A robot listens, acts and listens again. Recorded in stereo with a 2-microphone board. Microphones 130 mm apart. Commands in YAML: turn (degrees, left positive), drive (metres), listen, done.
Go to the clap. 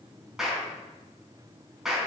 turn: -30
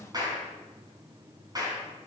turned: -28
turn: -150
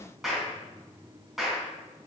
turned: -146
drive: 1.0
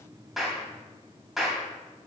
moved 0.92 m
drive: 1.0
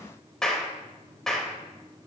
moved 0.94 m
drive: 1.0
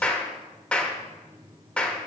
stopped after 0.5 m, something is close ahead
turn: 10
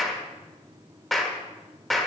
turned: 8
done: "I am next to the clap."